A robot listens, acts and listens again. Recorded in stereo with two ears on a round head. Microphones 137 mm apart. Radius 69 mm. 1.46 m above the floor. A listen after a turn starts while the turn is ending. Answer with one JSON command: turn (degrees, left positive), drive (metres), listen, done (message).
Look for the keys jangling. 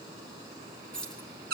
{"turn": 30}
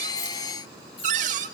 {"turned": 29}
{"listen": true}
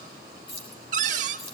{"turn": 140}
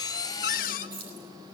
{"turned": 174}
{"turn": -40}
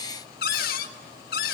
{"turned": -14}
{"turn": -25}
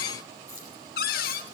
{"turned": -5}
{"turn": -20}
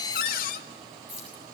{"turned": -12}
{"turn": -10}
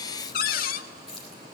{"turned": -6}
{"done": "Facing the keys jangling, over 4 m away."}